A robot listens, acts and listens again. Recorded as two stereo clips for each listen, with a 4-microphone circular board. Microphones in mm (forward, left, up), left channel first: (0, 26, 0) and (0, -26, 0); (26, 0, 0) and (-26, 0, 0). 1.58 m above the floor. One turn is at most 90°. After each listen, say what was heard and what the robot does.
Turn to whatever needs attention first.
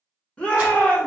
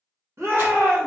The shout: 165° left. Turn 90° left.
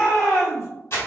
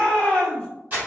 The shout is now 80° left. Turn 80° left.
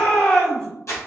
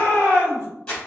The shout is now 25° left. Turn 25° left.
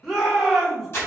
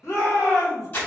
Found it: a shout, straight ahead.